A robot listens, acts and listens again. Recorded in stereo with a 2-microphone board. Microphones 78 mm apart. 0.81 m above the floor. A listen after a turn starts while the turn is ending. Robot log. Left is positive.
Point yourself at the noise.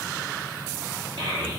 cmd yaw -90
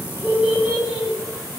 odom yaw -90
end: Found it: a child speaking, straight ahead, 1 to 2 m away.